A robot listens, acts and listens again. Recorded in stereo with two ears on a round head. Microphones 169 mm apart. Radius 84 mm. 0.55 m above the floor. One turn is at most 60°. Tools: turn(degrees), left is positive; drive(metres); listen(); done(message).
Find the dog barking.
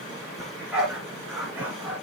turn(degrees=-30)
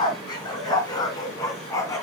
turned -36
turn(degrees=15)
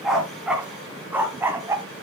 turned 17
turn(degrees=-15)
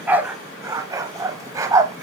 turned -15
turn(degrees=-15)
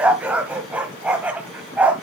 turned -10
turn(degrees=-10)
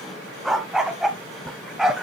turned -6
done("Found it: a dog barking, straight ahead.")